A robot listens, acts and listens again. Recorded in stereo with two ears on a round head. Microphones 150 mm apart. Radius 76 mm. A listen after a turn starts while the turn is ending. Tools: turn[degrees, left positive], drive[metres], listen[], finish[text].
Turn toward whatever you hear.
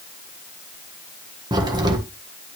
Thought: The crack: about 25° right or 155° right.
Action: turn[-25]
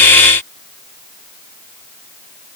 Action: listen[]
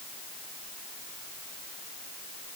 Action: finish[I heard a crack, but can't make it out now. It was about straight ahead or 130° right.]